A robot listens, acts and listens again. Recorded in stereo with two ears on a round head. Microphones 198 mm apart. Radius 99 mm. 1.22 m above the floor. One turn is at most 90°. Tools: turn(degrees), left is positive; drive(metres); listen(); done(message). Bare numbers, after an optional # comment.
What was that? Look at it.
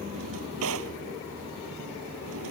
# The drawer: about 65° right or 115° right.
turn(-65)
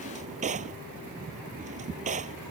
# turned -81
# So it is at 30° right.
turn(-30)
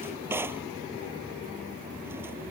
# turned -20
# The drawer is now 10° right.
turn(-10)
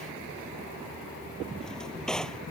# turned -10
done("Facing the drawer.")